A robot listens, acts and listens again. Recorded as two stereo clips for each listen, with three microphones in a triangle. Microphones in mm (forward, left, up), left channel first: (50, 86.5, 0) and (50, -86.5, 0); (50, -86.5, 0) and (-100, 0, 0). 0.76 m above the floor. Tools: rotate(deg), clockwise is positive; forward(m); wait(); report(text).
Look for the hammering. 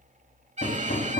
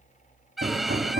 rotate(-120)
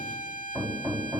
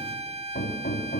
rotate(10)
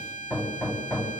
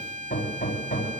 report("Facing the hammering, 2 to 4 m away.")